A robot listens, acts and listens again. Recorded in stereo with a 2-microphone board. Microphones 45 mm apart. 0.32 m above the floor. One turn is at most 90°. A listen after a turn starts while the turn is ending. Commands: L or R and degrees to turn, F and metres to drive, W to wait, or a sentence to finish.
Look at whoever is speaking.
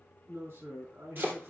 R70
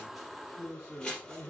R15
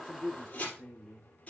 Facing the man speaking.